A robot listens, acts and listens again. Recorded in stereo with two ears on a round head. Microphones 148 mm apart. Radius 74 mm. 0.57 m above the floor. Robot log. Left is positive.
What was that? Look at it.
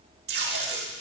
note: The tape being pulled: about 70° right or 110° right.
cmd yaw -70
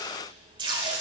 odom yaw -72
note: So it is at 30° right.
cmd yaw -30
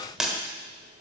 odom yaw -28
end: Found it: tape being pulled, straight ahead.